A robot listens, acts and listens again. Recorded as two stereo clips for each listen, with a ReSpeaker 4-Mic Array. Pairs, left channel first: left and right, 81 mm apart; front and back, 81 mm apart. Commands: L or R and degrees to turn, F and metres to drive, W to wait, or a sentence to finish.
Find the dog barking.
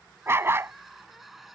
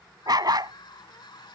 R150
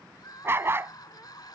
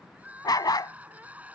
R35
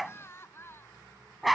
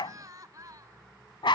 Found it: a dog barking, straight ahead.